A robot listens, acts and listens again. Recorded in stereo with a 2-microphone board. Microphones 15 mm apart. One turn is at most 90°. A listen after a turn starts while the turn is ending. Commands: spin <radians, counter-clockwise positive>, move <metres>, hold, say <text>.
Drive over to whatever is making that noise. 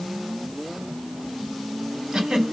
spin -1.13
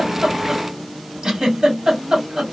spin -0.87
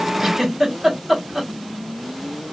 spin -0.44
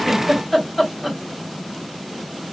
move 1.0
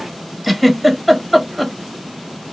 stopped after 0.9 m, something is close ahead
say I am next to the giggle.